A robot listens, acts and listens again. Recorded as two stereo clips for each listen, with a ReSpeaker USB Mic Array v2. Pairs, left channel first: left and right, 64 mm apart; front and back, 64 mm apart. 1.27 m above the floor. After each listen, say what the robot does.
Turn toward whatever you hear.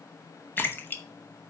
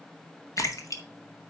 Turn 35° left.
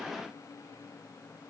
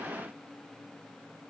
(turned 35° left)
Facing where the splash came from. I can't hear it now.